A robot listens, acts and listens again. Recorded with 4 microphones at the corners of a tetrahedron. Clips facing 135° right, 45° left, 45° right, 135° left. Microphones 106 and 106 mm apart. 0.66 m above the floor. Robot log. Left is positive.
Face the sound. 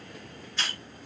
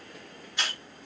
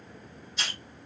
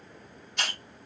note: The hiss: 120° left.
cmd yaw +120
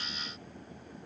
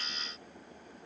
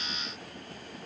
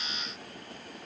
cmd idle
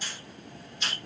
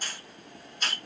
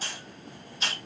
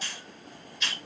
end: Found it: a hiss, straight ahead, 2 to 4 m away.